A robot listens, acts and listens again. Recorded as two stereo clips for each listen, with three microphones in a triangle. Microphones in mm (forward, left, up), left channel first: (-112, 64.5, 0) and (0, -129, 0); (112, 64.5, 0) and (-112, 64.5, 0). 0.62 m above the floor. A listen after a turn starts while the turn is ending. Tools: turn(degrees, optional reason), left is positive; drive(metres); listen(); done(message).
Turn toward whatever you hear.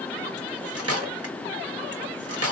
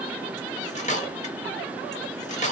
turn(degrees=-60, reason="The cutlery clinking: 60° right.")
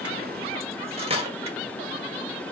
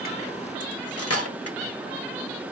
done("Found it: cutlery clinking, straight ahead, 1 to 2 m away.")